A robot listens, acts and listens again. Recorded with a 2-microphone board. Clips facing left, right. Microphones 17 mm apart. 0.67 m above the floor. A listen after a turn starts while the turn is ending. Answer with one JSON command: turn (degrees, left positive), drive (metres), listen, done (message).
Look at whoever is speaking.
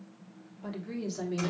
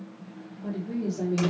{"turn": 45}
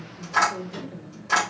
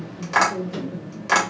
{"turn": 10}
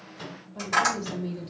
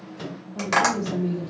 {"done": "Facing the woman speaking."}